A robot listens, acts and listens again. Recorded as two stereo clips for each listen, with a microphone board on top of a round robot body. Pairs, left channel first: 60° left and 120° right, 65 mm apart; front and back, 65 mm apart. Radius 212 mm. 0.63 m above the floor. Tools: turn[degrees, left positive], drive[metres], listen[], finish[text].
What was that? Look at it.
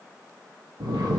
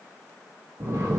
Thought: The snoring: 135° right.
Action: turn[-135]
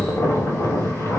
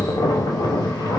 Action: finish[Facing the snoring, under 1 m away.]